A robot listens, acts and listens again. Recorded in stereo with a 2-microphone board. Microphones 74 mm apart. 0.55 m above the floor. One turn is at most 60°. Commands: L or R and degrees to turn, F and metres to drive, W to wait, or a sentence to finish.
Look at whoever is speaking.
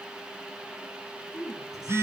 R60
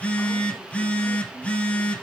W
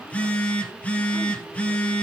W
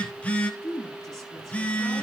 Facing the woman speaking, over 4 m away.